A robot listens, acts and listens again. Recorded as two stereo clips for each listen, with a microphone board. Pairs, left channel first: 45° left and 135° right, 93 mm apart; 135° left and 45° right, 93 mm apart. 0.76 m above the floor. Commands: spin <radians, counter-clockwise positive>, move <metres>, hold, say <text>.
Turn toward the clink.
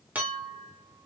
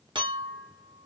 spin -1.13
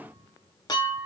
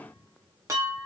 spin 0.17
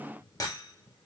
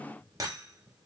say Found it: a clink, straight ahead.